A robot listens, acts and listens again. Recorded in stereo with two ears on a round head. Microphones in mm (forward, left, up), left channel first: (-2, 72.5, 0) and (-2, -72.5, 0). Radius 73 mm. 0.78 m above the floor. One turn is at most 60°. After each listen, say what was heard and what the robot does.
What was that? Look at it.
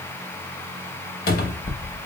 The cupboard door: about 60° left or 120° left. Turn 60° left.
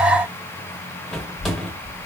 Facing the cupboard door, under 1 m away.